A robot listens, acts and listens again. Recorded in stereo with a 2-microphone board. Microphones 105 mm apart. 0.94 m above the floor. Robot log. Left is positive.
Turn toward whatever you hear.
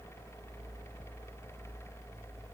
cmd idle
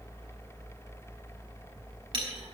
note: The clink: about 45° right or 135° right.
cmd yaw -45
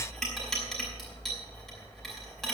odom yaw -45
end: Facing the clink, over 4 m away.